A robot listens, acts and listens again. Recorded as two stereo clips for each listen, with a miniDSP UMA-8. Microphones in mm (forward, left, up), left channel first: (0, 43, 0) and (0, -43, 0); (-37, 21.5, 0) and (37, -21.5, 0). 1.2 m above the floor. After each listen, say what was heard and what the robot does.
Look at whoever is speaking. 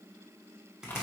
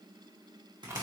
Keep listening.
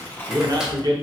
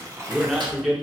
The man speaking: 115° right. Turn 115° right.
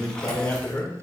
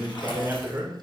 The man speaking is now 30° left. Turn 30° left.
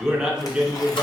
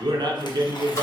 The man speaking is now 10° right. Turn 10° right.
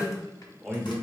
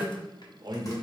Found it: a man speaking, straight ahead.